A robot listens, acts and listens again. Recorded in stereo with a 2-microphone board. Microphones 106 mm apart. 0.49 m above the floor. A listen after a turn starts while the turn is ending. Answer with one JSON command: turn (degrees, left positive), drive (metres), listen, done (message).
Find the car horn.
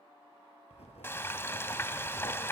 {"listen": true}
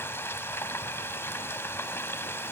{"listen": true}
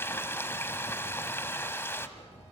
{"done": "I can't make out a car horn, only frying and writing."}